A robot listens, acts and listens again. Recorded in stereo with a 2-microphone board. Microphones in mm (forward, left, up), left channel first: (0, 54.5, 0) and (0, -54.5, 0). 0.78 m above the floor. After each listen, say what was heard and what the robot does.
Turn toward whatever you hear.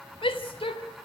The shout: about 55° left or 125° left. Turn 55° left.
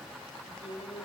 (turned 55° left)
So it is at 70° left. Turn 70° left.
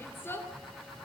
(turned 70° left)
The shout is now 20° left. Turn 20° left.
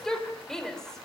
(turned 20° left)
Found it: a shout, straight ahead.